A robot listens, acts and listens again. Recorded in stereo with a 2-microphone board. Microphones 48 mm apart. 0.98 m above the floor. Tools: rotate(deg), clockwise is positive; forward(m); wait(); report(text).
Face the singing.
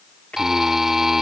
rotate(-30)
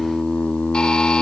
rotate(-45)
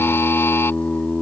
rotate(-45)
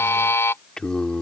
rotate(-20)
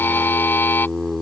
report("Found it: singing, straight ahead.")